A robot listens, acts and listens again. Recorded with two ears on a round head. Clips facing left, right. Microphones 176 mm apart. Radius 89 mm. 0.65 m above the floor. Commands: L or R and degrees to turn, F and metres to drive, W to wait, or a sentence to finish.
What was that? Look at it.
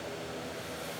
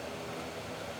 W
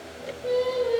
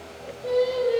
R30
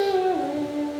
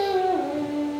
R30
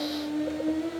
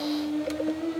R30
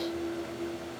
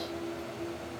L20
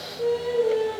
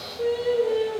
R20
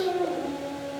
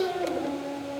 Facing the singing.